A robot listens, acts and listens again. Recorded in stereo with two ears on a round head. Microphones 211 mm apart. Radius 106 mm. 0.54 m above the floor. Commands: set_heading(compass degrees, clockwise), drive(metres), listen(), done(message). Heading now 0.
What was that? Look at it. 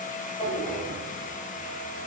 set_heading(330)
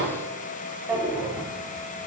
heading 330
done("Facing the drawer, 1 to 2 m away.")